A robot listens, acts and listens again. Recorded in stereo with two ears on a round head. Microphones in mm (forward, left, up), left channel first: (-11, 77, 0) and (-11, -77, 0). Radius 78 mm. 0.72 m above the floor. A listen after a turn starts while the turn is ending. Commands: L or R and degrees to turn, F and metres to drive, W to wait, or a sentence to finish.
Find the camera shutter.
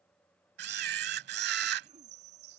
R65
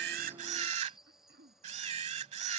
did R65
R40
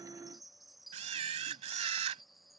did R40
R40
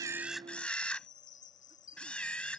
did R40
Facing the camera shutter.